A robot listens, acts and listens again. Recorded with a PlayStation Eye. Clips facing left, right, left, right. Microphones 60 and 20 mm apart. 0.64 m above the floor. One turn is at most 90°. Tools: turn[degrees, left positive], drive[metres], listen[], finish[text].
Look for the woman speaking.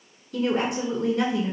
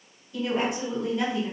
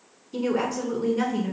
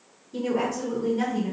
Thought: The woman speaking: about 70° left or 110° left.
Action: turn[70]
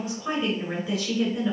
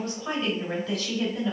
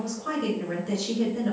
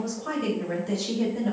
Thought: So it is at 10° left.
Action: turn[10]
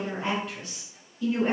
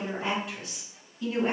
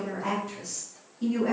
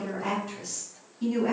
Action: finish[Found it: a woman speaking, straight ahead, 2 to 4 m away.]